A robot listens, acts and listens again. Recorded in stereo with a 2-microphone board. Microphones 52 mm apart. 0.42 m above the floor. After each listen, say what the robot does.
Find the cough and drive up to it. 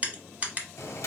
Keep listening.
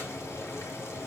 Keep listening.
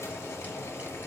I can't make out a cough to turn to.